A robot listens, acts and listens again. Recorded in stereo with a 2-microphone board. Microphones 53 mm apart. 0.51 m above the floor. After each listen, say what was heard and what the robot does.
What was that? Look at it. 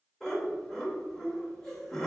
Turn 30° left.
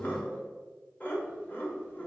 So it is at 140° left. Turn 140° left.
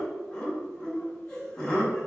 The laughter is now 20° left. Turn 20° left.
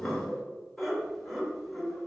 Found it: laughter, straight ahead.